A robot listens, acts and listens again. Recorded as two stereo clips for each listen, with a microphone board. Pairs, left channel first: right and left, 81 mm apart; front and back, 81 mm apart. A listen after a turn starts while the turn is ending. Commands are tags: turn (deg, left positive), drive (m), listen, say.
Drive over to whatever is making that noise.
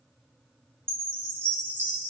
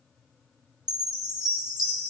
<turn deg="155"/>
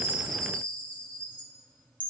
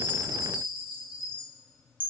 <turn deg="-20"/>
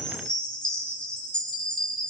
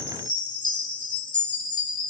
<turn deg="-10"/>
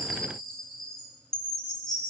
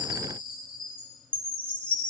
<drive m="1.0"/>
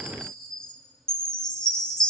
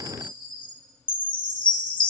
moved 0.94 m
<turn deg="-10"/>
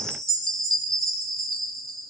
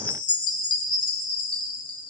<drive m="1.0"/>
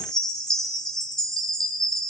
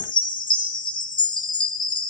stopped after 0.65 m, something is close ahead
<say>I am next to the chime.</say>